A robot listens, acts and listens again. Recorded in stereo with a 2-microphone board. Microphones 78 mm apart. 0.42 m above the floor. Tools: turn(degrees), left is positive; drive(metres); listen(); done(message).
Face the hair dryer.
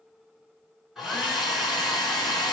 turn(degrees=30)
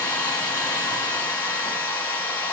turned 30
turn(degrees=155)
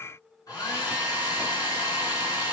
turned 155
turn(degrees=55)
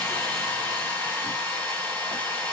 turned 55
turn(degrees=15)
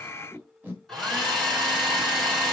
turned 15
done("Facing the hair dryer.")